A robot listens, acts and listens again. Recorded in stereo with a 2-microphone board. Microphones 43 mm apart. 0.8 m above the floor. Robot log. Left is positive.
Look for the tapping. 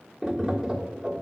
cmd yaw -30
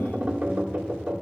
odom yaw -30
note: So it is at 140° right.
cmd yaw -140
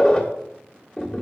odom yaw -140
note: The tapping is now 10° left.
cmd yaw +10
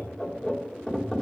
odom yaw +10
end: Facing the tapping.